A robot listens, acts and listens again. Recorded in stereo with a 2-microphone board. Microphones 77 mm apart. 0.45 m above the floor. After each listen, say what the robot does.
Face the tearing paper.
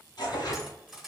Turn 70° left.
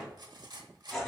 Found it: tearing paper, straight ahead, 1 to 2 m away.